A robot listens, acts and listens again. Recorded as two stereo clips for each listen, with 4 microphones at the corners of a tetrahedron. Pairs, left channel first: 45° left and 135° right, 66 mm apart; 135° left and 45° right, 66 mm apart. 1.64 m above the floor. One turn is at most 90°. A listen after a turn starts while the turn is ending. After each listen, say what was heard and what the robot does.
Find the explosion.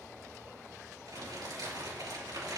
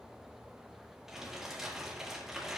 Keep listening.
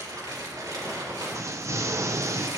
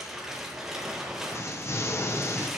The explosion: 175° right. Turn 90° right.
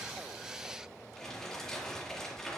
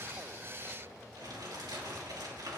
Nothing new. It was at 85° right. Turn 85° right.
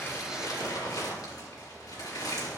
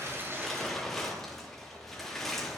I heard an explosion from this way, but can't make it out now.